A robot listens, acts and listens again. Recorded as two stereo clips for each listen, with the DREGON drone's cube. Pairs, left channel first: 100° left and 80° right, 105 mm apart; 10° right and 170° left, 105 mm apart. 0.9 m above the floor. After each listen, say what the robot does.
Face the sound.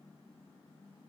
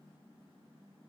Keep listening.
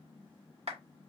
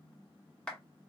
Turn 90° right.
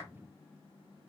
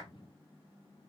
Keep listening.
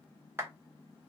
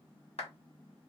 Turn 10° right.
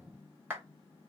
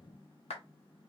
Found it: a clap, straight ahead.